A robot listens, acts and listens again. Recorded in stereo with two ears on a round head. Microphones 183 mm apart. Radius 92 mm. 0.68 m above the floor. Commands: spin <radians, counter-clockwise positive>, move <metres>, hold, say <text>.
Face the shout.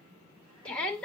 spin 0.52
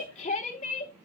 spin 2.53
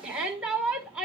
say Found it: a shout, straight ahead.